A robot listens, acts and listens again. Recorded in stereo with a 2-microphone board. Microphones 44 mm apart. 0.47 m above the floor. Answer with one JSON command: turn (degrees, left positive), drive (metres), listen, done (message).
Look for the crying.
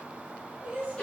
{"turn": -40}
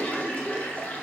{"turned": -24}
{"listen": true}
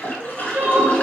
{"turn": -115}
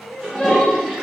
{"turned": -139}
{"turn": 20}
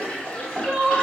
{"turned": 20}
{"done": "Found it: crying, straight ahead."}